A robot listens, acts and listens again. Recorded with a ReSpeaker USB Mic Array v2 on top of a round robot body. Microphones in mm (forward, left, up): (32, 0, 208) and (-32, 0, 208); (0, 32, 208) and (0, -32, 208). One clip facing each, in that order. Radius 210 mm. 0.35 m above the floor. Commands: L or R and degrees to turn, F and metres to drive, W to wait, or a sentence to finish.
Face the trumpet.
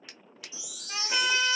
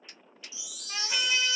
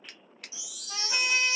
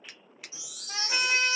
R80
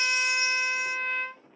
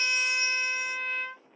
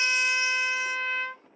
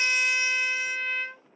R25
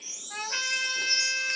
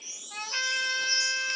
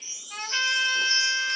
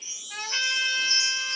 Found it: a trumpet, straight ahead, 1 to 2 m away.